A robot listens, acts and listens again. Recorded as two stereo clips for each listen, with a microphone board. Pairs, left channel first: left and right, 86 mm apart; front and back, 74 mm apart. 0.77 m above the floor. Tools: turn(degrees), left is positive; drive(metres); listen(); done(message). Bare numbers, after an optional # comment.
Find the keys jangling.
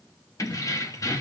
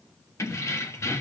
# The keys jangling: 45° left.
turn(45)
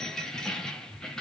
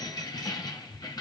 # The keys jangling is now 10° left.
turn(10)
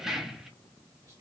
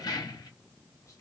done("Facing the keys jangling.")